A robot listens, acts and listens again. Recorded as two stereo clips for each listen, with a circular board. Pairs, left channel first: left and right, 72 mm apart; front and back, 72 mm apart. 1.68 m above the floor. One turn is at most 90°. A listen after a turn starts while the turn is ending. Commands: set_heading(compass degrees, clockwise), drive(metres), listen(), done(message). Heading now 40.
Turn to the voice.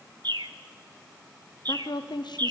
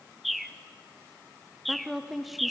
set_heading(310)
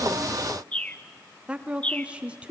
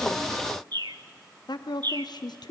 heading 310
set_heading(325)
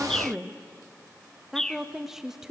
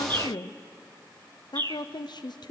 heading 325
done("Facing the woman speaking.")